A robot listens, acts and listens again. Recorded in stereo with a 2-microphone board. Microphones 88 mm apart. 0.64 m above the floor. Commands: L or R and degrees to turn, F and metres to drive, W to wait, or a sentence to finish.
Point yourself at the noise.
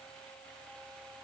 W
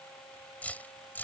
L20
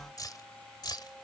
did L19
L130
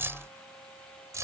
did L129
R35
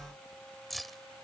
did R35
Facing the keys jangling.